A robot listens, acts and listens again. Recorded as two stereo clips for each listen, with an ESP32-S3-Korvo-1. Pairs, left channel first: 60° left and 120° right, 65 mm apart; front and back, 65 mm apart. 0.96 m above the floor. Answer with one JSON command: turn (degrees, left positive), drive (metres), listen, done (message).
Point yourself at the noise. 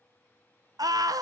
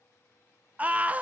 {"turn": -115}
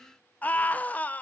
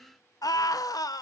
{"done": "Found it: a scream, straight ahead, under 1 m away."}